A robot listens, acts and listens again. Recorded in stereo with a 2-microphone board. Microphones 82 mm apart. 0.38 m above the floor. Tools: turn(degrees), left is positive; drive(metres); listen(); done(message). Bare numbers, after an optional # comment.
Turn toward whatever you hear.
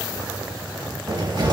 # The cupboard door: about 60° right or 120° right.
turn(-60)
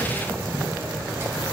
# So it is at 35° right.
turn(-35)
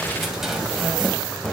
done("Facing the cupboard door.")